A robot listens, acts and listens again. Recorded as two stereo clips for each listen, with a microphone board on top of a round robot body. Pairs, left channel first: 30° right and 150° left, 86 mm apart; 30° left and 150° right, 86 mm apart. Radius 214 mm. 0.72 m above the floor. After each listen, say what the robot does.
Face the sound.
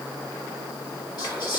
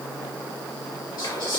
Facing the whispering, 1 to 2 m away.